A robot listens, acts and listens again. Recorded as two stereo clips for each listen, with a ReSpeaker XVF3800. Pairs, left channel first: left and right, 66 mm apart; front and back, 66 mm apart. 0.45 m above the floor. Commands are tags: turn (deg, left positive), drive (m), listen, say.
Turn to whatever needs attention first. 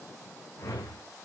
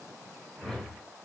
<listen/>
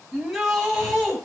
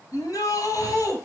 <turn deg="-10"/>
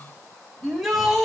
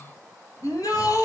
<say>Facing the shout, 2 to 4 m away.</say>